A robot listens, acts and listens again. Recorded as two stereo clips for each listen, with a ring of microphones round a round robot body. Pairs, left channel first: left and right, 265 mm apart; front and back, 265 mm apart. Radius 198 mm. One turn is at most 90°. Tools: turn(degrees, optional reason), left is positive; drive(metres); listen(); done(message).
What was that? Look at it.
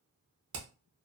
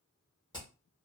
turn(degrees=-75, reason="The hammering: 75° right.")
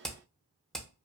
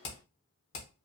done("Facing the hammering.")